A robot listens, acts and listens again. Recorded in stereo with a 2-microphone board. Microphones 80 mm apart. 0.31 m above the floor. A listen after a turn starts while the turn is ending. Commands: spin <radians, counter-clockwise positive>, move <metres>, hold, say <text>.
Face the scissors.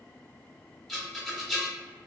hold
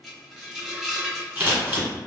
spin -0.44
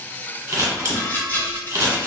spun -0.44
spin -2.18
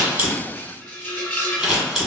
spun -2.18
say Found it: scissors, straight ahead.